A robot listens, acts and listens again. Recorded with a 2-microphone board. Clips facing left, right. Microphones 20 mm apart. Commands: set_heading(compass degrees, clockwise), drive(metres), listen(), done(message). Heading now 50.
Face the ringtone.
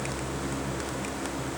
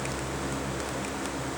listen()
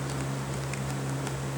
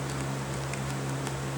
listen()
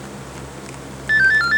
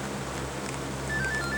set_heading(320)
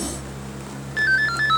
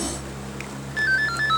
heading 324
set_heading(314)
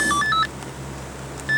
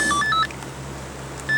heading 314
done("Found it: a ringtone, straight ahead.")